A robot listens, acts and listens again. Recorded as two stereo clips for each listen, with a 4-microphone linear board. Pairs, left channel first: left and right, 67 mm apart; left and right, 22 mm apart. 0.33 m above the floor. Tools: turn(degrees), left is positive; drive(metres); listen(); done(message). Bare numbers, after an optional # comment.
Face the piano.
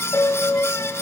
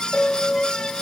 # The piano: about 40° left or 140° left.
turn(40)
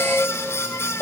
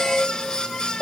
done("Facing the piano, under 1 m away.")